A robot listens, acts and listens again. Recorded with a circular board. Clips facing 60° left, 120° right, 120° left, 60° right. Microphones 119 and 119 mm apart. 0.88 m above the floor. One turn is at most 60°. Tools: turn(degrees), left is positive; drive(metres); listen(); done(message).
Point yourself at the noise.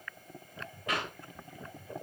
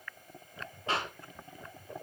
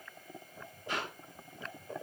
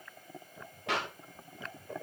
turn(degrees=-60)
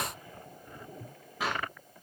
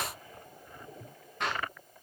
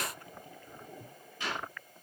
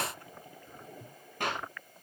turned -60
turn(degrees=-25)
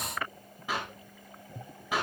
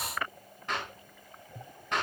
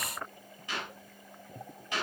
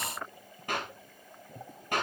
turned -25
turn(degrees=-25)
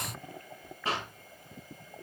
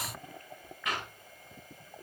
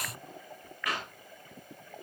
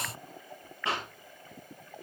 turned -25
done("Facing the clap, over 4 m away.")